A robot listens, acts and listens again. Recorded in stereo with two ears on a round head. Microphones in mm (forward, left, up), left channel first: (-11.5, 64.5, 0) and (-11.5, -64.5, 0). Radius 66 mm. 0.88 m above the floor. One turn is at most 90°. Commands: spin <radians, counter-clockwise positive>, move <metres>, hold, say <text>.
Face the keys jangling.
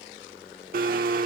hold
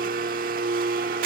hold
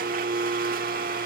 say I can't make out keys jangling, only a blender.